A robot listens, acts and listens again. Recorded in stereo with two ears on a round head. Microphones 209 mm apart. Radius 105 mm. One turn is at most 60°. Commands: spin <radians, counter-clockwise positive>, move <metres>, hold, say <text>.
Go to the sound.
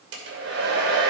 spin -1.05
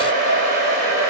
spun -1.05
spin -0.87
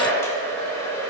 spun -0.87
spin 0.17
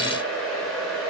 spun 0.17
move 1.0
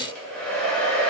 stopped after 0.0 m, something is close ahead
say Blocked. The hair dryer is further on, straight ahead.